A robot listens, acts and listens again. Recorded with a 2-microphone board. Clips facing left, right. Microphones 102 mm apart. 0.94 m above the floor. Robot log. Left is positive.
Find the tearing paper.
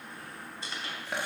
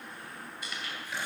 note: The tearing paper: about 30° left or 150° left.
cmd yaw +30
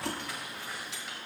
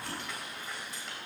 end: Facing the tearing paper.